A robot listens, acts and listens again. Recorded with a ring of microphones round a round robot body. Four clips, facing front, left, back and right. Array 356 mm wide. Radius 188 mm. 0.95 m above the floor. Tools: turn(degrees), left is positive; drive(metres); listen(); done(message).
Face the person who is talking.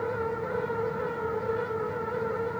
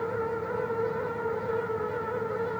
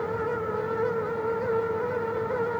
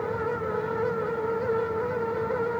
listen()
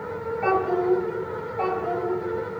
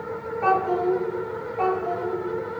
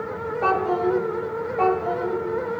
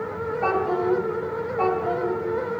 turn(degrees=-175)
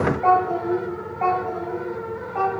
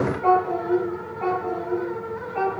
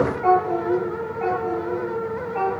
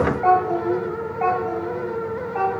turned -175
turn(degrees=-70)
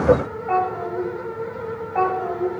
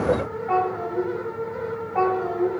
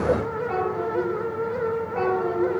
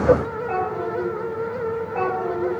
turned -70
turn(degrees=15)
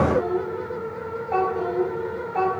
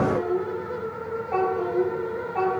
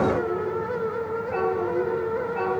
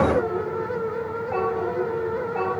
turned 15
done("Found it: a child speaking, straight ahead.")